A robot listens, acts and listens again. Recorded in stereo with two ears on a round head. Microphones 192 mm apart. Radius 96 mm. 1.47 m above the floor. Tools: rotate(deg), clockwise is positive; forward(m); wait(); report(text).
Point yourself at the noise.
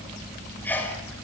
rotate(-30)
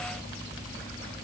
wait()
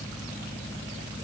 report("I heard a sneeze, but can't make it out now. It was about 20° right or 140° left.")